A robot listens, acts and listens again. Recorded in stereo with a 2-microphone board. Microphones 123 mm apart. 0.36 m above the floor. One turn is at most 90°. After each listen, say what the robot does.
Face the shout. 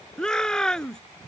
Turn 30° left.
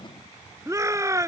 Turn 25° right.
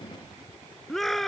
Facing the shout.